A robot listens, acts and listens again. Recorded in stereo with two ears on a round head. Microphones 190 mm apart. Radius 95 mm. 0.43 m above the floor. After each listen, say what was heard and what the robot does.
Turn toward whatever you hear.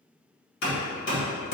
The hammering: about 65° left or 115° left. Turn 65° left.
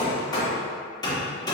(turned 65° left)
So it is at 25° left. Turn 25° left.
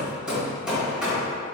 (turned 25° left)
Facing the hammering.